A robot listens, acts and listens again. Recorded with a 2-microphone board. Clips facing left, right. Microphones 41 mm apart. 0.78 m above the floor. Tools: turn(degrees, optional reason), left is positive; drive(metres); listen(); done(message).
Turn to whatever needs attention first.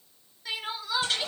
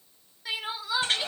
turn(degrees=-30)
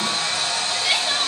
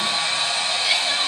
listen()
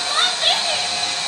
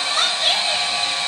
turn(degrees=20, reason="So it is at 20° left.")
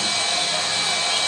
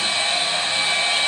listen()
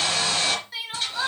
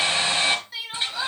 done("Found it: crying, straight ahead, 2 to 4 m away.")